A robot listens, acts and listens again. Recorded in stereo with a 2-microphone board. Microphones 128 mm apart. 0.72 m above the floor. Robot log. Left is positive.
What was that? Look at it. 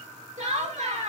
note: The laughter: about 65° right or 115° right.
cmd yaw -65
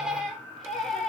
end: Found it: laughter, straight ahead.